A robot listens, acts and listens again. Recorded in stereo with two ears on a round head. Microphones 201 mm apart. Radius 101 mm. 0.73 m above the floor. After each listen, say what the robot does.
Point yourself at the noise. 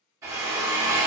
Turn 30° right.
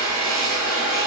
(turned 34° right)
Turn 20° left.
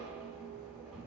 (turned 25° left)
Keep listening.
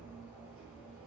Keep listening.
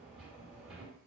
I heard a drill from this way, but can't make it out now.